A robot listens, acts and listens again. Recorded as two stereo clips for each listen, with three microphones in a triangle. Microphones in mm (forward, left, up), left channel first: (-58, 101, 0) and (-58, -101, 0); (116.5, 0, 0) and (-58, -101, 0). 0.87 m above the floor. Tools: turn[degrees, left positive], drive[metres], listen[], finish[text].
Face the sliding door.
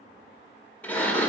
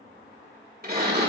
Thought: The sliding door: 175° left.
Action: turn[175]
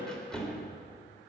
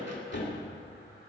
Action: finish[Found it: a sliding door, straight ahead, 2 to 4 m away.]